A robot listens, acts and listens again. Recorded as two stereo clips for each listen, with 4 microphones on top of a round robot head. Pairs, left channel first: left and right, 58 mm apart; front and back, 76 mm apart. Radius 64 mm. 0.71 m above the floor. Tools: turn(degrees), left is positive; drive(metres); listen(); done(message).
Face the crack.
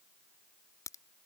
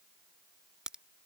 turn(degrees=100)
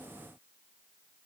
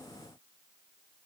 done("Facing where the crack came from. I can't hear it now.")